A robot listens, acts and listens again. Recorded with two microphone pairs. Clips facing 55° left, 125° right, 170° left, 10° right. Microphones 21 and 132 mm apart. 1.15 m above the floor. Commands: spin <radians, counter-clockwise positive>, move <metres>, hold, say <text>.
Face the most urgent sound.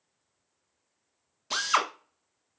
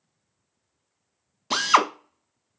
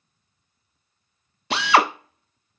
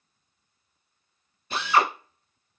hold
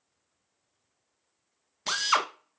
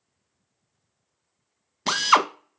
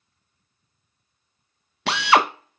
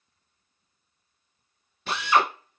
hold
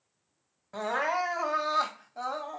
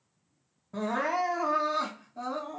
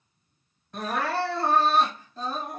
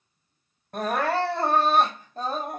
spin 0.44
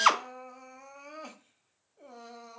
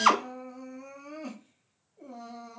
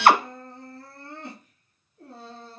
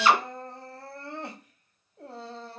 say Found it: crying, straight ahead.